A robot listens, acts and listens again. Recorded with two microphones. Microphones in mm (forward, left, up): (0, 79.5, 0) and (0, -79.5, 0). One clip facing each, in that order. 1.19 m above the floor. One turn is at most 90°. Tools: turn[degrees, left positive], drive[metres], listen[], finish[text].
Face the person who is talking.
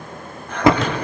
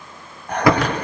Action: listen[]
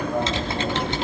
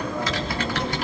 Thought: The child speaking: about 55° left or 125° left.
Action: turn[55]
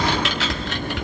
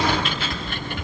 Action: listen[]
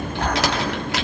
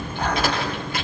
Action: listen[]
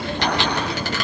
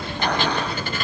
Action: finish[I heard a child speaking, but can't make it out now. It was about straight ahead or 70° left.]